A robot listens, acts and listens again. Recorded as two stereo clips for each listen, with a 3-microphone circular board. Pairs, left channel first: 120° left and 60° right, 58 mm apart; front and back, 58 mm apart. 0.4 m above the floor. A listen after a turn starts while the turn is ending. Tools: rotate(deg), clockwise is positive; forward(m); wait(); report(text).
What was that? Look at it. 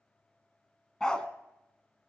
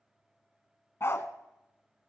rotate(-40)
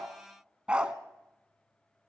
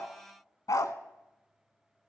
rotate(-10)
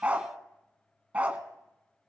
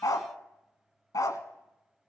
report("Found it: a dog barking, straight ahead.")